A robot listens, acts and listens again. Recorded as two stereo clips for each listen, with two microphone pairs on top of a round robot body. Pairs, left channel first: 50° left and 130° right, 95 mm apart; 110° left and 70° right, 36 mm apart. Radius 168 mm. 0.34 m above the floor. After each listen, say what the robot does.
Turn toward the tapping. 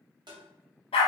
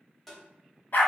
Turn 165° right.
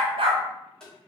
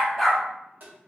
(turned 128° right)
Turn 35° right.
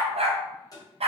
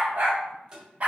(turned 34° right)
Facing the tapping, 1 to 2 m away.